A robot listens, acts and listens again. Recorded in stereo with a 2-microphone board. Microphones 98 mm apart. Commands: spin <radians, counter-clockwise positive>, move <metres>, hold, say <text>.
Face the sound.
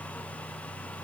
hold
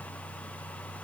hold
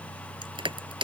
spin -1.05
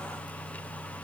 hold
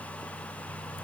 hold
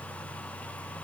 say I heard crushing, but can't make it out now. It was about straight ahead or 60° right.